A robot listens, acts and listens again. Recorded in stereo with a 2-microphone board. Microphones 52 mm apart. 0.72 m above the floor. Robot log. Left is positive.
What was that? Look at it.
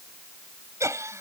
note: The laughter: about 70° right or 110° right.
cmd yaw -70
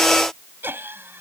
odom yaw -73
note: So it is at 45° right.
cmd yaw -45
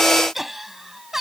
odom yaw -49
end: Facing the laughter.